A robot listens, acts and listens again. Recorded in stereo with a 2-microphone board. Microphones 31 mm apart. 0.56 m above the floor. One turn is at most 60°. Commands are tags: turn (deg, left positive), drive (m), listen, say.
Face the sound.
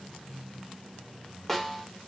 <turn deg="30"/>
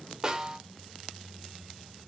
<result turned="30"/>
<turn deg="-25"/>
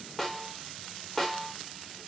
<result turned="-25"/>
<say>Found it: a snare drum, straight ahead, 1 to 2 m away.</say>